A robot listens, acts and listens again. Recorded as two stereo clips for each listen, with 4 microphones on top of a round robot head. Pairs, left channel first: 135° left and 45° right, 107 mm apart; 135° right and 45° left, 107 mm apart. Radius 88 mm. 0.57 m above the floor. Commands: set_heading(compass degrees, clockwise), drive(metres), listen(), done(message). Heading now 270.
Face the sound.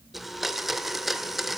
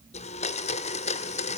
set_heading(45)
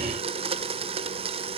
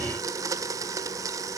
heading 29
set_heading(44)
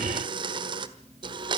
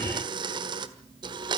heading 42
done("Found it: a blender, straight ahead, 1 to 2 m away.")